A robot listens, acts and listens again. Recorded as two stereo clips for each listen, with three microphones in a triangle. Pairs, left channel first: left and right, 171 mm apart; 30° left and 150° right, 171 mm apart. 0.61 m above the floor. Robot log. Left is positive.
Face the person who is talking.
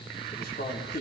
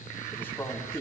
note: The man speaking: 105° left.
cmd yaw +105
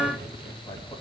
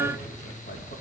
cmd idle
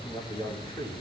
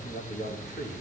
note: The man speaking is now 30° left.
cmd yaw +30
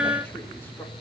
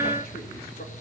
cmd idle
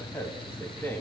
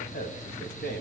note: The man speaking is now 15° left.
cmd yaw +15
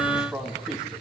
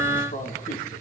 end: Found it: a man speaking, straight ahead, over 4 m away.